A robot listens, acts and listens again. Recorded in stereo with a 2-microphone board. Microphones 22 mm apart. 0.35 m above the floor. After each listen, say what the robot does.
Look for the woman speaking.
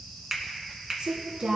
Turn 70° right.
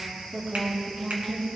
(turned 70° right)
Turn 40° right.
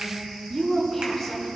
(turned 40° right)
Facing the woman speaking.